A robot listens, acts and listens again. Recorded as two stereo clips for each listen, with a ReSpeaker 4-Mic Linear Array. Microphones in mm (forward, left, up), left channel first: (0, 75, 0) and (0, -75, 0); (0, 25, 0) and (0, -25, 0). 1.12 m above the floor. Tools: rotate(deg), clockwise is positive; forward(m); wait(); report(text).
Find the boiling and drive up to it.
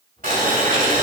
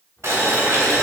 rotate(75)
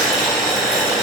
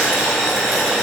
forward(1.0)
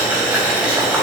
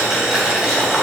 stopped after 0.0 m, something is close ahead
rotate(10)
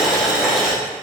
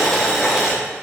report("Something is in my way. I am facing the boiling but have not reached it.")